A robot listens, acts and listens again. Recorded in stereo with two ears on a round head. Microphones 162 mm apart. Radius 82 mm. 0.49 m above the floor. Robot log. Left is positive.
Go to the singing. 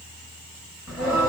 cmd yaw -30
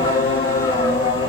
note: So it is at 25° left.
cmd yaw +25
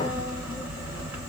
note: The singing is now 10° right.
cmd yaw -10
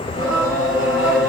cmd fwd 1.0
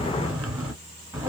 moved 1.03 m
note: The singing is now 10° right.
cmd yaw -10
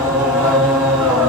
cmd fwd 1.0
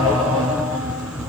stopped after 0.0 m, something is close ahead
end: Arrived at the singing, straight ahead.